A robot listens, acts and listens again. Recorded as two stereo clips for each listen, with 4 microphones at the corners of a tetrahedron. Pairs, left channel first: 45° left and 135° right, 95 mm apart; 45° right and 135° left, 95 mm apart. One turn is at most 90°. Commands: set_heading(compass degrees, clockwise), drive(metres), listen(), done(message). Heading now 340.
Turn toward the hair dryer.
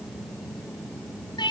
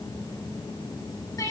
listen()
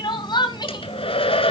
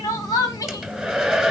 set_heading(295)
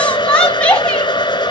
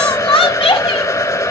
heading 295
done("Facing the hair dryer, 1 to 2 m away.")